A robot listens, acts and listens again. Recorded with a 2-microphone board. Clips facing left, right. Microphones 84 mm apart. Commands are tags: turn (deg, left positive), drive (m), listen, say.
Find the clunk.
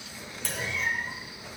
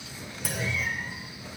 <turn deg="-30"/>
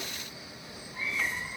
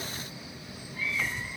<listen/>
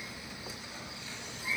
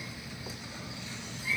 <say>I heard a clunk, but can't make it out now. It was about 25° left or 145° right.</say>